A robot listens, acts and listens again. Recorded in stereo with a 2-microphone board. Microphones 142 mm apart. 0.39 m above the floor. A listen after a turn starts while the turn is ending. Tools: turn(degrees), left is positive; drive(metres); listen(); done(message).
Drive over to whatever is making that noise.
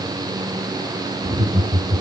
turn(degrees=-45)
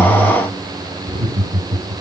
turn(degrees=-85)
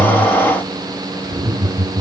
turn(degrees=-20)
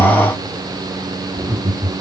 drive(metres=1.0)
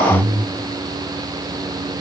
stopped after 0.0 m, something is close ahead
done("Blocked. The laughter is further on, straight ahead.")